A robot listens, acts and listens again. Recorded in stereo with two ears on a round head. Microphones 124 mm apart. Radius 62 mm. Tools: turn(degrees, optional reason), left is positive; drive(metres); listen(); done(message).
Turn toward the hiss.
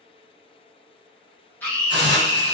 turn(degrees=-35, reason="The hiss: about 35° right or 145° right.")
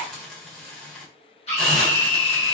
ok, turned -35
done("Facing the hiss.")